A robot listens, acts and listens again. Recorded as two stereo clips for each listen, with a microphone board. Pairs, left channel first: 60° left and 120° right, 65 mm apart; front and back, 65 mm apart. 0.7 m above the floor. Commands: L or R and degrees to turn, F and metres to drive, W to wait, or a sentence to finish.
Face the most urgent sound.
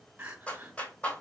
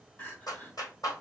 R65
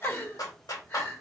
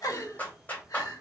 Facing the crying, 1 to 2 m away.